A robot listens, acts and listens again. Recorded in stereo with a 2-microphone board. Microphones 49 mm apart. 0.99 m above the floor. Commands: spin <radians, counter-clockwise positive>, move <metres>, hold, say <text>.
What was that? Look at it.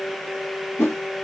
spin 1.13
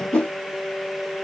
spin 0.44
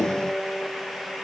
hold
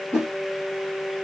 spin -0.17
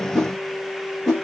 say Found it: a whoosh, straight ahead, 1 to 2 m away.